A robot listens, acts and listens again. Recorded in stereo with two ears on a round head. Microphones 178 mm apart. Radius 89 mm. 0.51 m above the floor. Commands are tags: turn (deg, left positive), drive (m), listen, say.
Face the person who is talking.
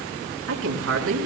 <turn deg="-90"/>
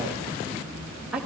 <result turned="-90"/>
<say>Found it: a woman speaking, straight ahead, over 4 m away.</say>